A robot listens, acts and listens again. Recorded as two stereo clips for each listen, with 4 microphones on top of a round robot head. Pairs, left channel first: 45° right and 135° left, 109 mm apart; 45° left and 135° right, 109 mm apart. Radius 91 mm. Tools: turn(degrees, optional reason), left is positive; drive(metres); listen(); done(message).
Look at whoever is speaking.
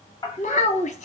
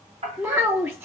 turn(degrees=-60, reason="The child speaking: 60° right.")
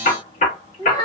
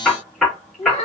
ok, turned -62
done("Facing the child speaking, 1 to 2 m away.")